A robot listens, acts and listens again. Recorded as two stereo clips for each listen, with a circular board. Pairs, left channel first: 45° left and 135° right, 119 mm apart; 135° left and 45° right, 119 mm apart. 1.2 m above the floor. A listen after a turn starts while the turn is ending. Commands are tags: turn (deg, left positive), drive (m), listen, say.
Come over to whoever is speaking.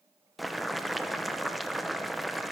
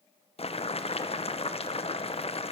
<listen/>
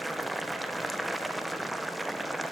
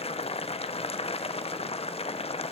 <listen/>
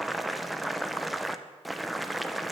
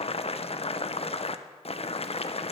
<say>I can't make out anyone speaking to turn to.</say>